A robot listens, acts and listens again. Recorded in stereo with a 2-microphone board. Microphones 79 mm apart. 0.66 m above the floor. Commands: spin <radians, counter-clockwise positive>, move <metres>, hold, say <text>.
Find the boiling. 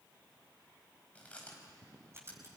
hold
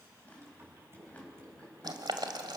spin -1.22
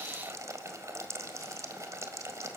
spin -0.70
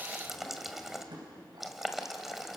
say Found it: boiling, straight ahead, 1 to 2 m away.